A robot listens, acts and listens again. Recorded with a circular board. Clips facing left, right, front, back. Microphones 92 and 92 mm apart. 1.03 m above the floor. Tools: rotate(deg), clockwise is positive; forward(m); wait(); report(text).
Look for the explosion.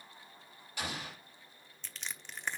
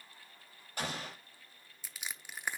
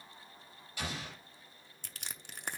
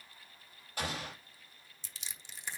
rotate(135)
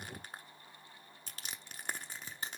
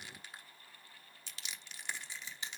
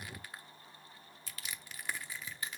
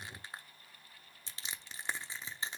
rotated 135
report("I heard an explosion from this way, but can't make it out now.")